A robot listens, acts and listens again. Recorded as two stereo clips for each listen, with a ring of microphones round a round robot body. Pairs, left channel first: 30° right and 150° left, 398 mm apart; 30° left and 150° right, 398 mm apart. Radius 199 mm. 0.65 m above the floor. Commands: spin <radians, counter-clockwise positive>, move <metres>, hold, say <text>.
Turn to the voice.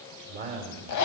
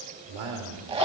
spin -2.53
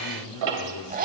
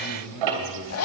spin 0.17
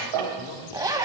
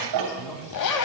hold
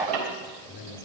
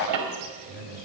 say Found it: a man speaking, straight ahead.